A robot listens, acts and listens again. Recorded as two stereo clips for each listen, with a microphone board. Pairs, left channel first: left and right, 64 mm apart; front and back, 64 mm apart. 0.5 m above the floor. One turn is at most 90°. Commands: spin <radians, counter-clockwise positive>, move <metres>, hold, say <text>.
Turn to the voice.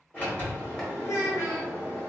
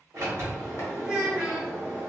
spin 1.57
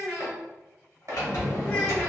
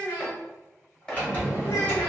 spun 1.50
spin 0.44
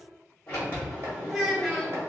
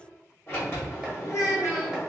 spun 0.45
say Found it: a child speaking, straight ahead.